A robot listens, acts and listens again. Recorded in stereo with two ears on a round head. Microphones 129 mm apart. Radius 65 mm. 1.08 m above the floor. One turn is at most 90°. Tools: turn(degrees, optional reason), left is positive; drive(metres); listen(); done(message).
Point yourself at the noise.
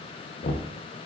turn(degrees=60, reason="The knocking: about 60° left or 120° left.")
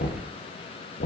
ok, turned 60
turn(degrees=65, reason="So it is at 65° left.")
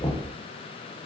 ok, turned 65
turn(degrees=25, reason="The knocking is now 25° left.")
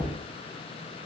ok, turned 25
turn(degrees=15, reason="The knocking is now 15° left.")
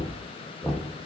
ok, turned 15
done("Found it: knocking, straight ahead, under 1 m away.")